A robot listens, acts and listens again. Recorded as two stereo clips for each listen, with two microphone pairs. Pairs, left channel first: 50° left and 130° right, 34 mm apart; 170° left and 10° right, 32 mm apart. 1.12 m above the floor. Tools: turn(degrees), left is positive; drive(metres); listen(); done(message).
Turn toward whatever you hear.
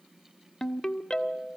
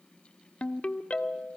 turn(degrees=125)
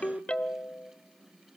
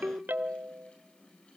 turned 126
done("Found it: a ringtone, straight ahead, 1 to 2 m away.")